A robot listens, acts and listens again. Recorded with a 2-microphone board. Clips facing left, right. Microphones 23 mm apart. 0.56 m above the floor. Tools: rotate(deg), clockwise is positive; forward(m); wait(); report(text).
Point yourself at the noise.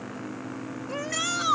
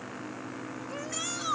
rotate(-35)
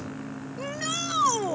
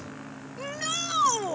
report("Facing the shout.")